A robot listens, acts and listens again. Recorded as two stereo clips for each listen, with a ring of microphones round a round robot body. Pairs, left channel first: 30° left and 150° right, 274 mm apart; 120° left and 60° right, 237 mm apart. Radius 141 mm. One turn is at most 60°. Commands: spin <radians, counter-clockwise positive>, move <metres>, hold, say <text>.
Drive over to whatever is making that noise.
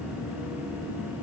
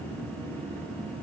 hold
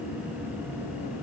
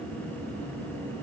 hold
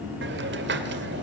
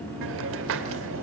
spin -1.05
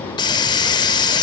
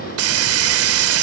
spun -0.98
spin -0.79
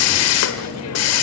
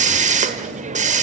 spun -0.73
move 1.0
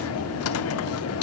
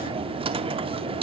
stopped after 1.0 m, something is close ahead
say I am next to the hiss.